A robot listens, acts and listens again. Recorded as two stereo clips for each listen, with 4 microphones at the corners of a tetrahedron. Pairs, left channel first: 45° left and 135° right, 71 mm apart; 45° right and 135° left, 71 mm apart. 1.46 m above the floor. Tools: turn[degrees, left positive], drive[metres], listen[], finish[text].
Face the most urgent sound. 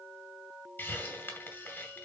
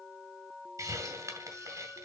Action: listen[]
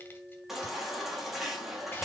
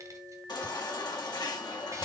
Thought: The baby crying: 50° right.
Action: turn[-50]
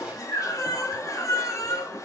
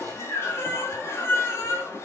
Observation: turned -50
Action: finish[Facing the baby crying, 2 to 4 m away.]